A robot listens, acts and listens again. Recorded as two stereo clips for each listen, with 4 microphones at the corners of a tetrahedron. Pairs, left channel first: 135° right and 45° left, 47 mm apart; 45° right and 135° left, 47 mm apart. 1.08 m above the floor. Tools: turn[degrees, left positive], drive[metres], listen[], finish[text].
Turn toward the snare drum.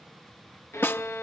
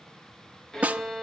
Thought: The snare drum: 170° right.
Action: turn[-170]
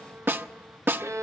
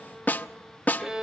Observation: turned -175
Action: finish[Found it: a snare drum, straight ahead, under 1 m away.]